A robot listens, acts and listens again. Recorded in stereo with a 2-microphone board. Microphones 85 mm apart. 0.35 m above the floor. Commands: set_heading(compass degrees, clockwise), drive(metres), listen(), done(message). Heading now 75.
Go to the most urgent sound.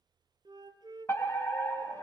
set_heading(45)
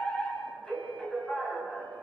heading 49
set_heading(39)
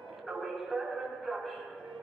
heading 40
drive(1.0)
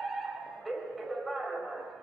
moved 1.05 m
drive(1.0)
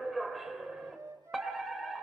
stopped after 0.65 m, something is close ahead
done("I am next to the fire alarm.")